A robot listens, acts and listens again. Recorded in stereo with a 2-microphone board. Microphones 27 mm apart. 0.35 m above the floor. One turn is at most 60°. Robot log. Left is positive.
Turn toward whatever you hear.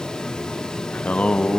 note: The singing: about 60° left or 120° left.
cmd yaw +60
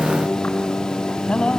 note: So it is at 60° left.
cmd yaw +60
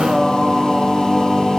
note: The singing is now 10° right.
cmd yaw -10
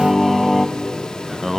end: Found it: singing, straight ahead, 1 to 2 m away.